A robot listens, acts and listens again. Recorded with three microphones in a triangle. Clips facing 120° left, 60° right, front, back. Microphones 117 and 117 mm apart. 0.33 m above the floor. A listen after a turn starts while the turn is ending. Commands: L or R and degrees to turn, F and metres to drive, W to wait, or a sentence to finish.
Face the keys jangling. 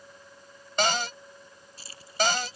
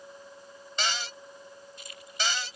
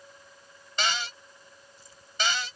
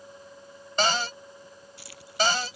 L175
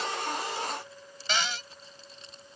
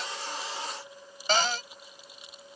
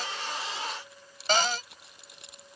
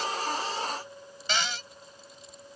L20
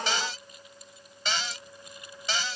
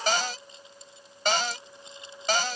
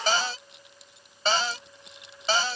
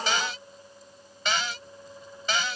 W
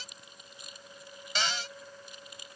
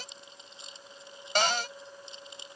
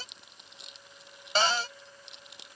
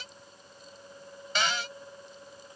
Found it: keys jangling, straight ahead.